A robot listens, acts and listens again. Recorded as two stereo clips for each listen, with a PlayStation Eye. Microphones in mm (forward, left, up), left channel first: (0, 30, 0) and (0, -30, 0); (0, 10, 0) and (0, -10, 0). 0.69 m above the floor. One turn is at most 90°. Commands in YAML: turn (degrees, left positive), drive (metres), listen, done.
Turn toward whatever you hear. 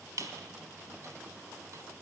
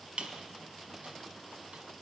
turn: -75
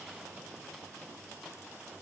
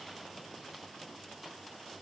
listen: true
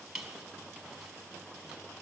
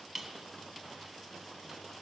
done: "Facing the squeak, 1 to 2 m away."